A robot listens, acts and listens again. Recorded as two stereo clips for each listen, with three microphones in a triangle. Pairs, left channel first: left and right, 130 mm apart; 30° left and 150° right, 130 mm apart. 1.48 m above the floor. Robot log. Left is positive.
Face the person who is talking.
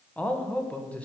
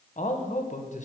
note: The man speaking: 10° left.
cmd yaw +10
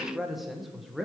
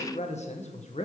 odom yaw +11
end: Found it: a man speaking, straight ahead, 1 to 2 m away.